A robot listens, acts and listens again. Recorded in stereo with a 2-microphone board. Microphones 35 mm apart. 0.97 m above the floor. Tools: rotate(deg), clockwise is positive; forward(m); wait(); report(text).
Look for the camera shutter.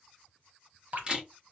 rotate(25)
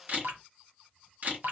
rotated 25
rotate(125)
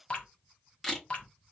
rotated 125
report("Found it: a camera shutter, straight ahead, 2 to 4 m away.")